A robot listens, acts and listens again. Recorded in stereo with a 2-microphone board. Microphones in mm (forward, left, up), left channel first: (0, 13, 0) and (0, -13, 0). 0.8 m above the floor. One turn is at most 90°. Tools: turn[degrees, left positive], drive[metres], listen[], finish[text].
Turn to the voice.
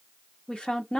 Thought: The woman speaking: about 35° left or 145° left.
Action: turn[35]
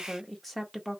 Action: finish[Found it: a woman speaking, straight ahead, under 1 m away.]